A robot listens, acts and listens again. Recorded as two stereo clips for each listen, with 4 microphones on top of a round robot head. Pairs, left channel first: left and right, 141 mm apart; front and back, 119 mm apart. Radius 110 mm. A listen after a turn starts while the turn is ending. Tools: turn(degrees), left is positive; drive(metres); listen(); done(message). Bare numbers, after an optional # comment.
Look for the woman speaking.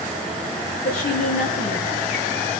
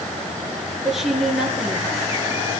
# The woman speaking: 95° left.
turn(95)
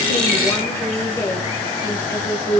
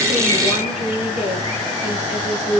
# The woman speaking is now 25° left.
turn(25)
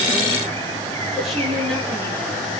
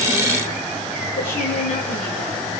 listen()
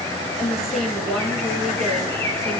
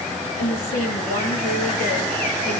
done("Facing the woman speaking, over 4 m away.")